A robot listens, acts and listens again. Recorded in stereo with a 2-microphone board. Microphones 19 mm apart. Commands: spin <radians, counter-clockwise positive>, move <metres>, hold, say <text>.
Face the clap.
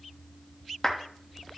spin 0.35
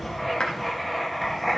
spin 2.44
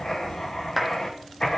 say Facing the clap, 1 to 2 m away.